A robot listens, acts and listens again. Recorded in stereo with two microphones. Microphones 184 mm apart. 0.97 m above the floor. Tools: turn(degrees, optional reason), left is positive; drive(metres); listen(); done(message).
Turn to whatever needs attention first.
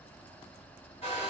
listen()
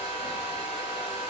listen()
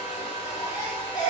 turn(degrees=20, reason="The baby crying: about 20° left or 160° left.")
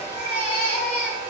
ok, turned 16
turn(degrees=145, reason="So it is at 145° left.")
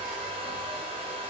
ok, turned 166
turn(degrees=-20, reason="Nothing new. It was at 20° right.")
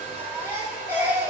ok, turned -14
turn(degrees=-10, reason="The baby crying is now 10° right.")
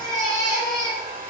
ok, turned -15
done("Facing the baby crying.")